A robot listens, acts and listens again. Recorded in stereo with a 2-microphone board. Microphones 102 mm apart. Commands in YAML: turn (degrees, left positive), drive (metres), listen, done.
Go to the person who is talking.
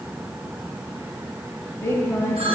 turn: 20
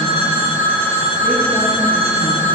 listen: true
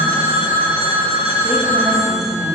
listen: true
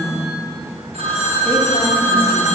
drive: 1.0
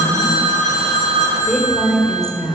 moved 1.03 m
drive: 1.0
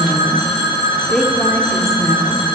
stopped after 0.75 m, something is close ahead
done: "I am next to the woman speaking."